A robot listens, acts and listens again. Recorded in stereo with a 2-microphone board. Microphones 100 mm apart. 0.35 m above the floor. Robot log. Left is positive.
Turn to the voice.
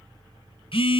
cmd idle
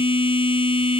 cmd idle
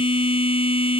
end: I can't make out anyone speaking, only a phone buzzing.